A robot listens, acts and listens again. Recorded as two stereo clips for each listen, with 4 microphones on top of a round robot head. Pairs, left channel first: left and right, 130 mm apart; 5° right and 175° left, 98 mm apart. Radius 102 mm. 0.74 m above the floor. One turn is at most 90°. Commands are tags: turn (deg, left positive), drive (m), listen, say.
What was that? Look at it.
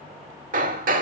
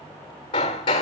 <turn deg="-55"/>
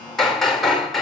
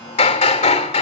<say>Facing the hammering.</say>